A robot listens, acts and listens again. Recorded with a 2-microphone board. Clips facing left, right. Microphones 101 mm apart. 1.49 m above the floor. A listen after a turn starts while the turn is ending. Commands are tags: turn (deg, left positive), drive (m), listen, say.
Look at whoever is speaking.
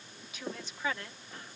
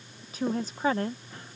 <turn deg="-40"/>
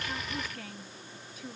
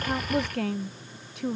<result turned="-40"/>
<turn deg="-100"/>
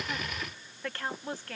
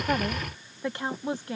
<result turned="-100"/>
<turn deg="-20"/>
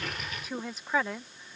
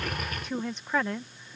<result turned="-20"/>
<say>Found it: a woman speaking, straight ahead.</say>